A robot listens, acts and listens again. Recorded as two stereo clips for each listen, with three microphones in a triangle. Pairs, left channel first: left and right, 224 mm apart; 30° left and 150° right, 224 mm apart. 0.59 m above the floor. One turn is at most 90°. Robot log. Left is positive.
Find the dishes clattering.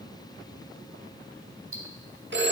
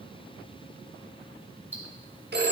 cmd idle
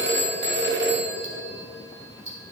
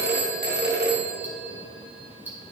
cmd idle
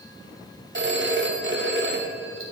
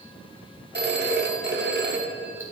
end: I can't make out dishes clattering, only ticking and a phone ringing.